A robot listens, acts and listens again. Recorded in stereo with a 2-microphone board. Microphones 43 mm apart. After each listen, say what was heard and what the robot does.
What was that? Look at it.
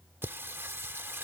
The singing: about 60° right or 120° right. Turn 60° right.
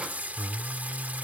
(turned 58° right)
So it is at 45° right. Turn 45° right.
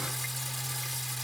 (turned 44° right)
Found it: singing, straight ahead.